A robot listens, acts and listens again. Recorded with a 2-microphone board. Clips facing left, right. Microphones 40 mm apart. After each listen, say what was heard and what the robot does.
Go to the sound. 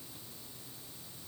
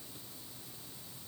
Keep listening.
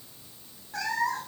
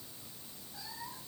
Turn 90° left.
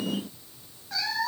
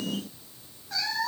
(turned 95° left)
Drive 1.0 m forward.
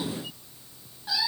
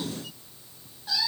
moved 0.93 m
The cat meowing is now 10° left. Turn 10° left.
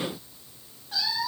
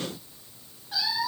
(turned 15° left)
Drive 1.0 m forward.
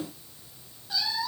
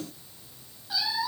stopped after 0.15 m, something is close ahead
Something is in my way. I am facing the cat meowing but have not reached it.